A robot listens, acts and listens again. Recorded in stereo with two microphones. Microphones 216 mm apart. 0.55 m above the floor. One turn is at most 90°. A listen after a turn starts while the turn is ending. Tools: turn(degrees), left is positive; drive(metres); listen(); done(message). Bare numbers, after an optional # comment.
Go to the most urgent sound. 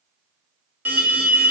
turn(-30)
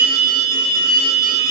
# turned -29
# So it is at 20° left.
turn(20)
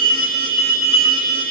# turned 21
drive(1.0)
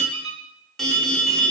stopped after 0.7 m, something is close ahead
done("Arrived at the alarm, straight ahead.")